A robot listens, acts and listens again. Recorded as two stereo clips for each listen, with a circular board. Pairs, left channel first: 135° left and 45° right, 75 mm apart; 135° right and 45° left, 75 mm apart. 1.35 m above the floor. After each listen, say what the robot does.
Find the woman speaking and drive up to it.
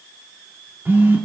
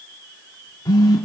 Keep listening.
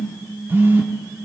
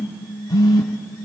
Keep listening.
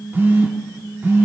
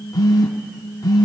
I can't make out a woman speaking to turn to.